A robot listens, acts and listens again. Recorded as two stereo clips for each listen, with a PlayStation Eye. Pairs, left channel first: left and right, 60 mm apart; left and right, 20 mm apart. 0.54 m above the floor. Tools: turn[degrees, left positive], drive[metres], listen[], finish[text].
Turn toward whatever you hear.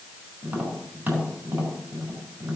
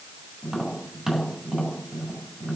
Thought: The tapping: about 30° right or 150° right.
Action: turn[-30]
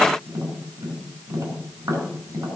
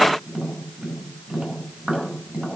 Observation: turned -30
Thought: So it is at 120° right.
Action: turn[-120]
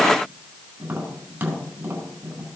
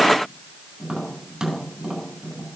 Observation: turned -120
Thought: The tapping is now 35° right.
Action: turn[-35]
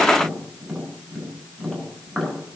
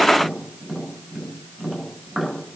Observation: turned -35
Action: finish[Found it: tapping, straight ahead, over 4 m away.]